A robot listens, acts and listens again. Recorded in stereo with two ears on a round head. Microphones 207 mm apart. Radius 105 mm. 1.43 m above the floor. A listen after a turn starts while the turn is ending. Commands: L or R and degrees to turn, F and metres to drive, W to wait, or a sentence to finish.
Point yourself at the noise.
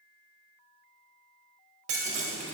R30
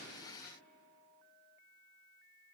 W
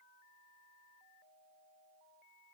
I heard breaking glass, but can't make it out now. It was about straight ahead or 120° right.